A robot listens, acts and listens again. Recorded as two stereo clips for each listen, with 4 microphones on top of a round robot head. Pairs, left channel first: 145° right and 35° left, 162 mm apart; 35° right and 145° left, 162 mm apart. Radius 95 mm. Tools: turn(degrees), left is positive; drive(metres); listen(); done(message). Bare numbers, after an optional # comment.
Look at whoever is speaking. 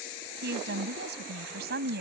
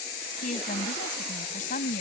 done("Facing the woman speaking.")